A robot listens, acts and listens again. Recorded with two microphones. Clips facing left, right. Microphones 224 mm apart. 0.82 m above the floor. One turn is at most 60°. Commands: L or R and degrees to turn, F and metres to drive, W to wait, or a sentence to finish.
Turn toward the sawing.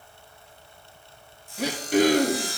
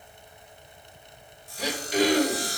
R40
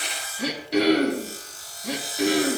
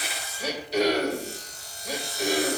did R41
Found it: sawing, straight ahead.